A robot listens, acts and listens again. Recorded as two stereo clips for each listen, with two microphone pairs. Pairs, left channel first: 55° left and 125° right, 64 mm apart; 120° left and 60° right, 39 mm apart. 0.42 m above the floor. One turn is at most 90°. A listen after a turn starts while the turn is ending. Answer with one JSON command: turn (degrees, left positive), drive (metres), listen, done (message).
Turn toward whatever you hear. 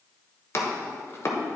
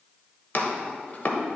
{"turn": 90}
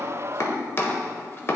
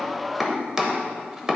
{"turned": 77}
{"turn": 15}
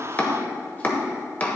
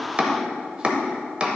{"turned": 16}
{"done": "Found it: chopping, straight ahead."}